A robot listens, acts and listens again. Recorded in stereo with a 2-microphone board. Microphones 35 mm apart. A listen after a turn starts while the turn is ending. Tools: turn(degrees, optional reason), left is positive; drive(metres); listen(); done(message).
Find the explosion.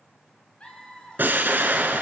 turn(degrees=-65, reason="The explosion: about 65° right or 115° right.")
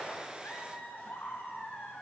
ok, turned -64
listen()
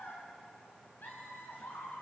done("I heard an explosion, but can't make it out now. It was about 5° right or 50° right.")